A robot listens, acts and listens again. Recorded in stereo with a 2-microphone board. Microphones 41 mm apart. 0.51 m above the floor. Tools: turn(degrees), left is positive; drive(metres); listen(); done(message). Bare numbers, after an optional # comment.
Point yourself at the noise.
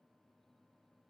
listen()
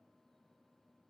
listen()
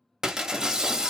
# The breaking glass: about 15° right or 165° right.
turn(-15)
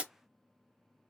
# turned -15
# So it is at 150° right.
turn(-150)
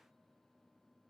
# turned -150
done("I heard breaking glass from this way, but can't make it out now.")